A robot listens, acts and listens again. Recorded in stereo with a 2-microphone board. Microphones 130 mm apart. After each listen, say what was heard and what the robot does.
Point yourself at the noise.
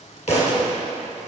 The thud: about 55° left or 125° left. Turn 55° left.
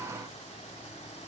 Keep listening.
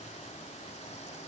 I heard a thud, but can't make it out now. It was about straight ahead or 70° left.